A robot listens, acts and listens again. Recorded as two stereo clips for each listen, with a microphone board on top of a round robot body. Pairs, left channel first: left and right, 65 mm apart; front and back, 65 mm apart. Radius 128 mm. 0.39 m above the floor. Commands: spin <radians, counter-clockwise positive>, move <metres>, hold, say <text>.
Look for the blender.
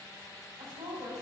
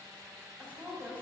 hold
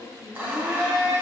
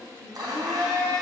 spin -2.79
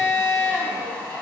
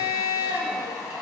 spin 0.35
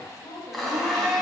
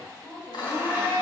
say Found it: a blender, straight ahead.